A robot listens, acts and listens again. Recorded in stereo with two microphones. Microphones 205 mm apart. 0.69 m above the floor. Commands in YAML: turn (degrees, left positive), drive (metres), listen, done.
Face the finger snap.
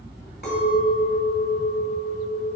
listen: true
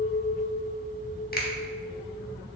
listen: true
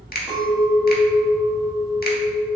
turn: 50
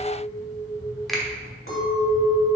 done: "Facing the finger snap."